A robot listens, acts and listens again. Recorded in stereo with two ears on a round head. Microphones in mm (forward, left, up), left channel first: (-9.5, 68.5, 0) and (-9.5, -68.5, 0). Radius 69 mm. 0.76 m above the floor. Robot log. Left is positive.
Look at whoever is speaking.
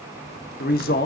note: The man speaking: about 65° left or 115° left.
cmd yaw +65
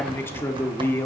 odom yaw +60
note: So it is at 15° left.
cmd yaw +15
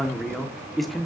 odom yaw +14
end: Found it: a man speaking, straight ahead.